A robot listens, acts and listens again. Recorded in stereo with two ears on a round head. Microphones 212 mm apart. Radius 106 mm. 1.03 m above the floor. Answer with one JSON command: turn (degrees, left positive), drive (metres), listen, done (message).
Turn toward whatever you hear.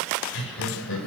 {"turn": 55}
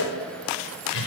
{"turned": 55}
{"turn": 60}
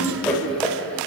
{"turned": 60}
{"done": "Facing the laughter, over 4 m away."}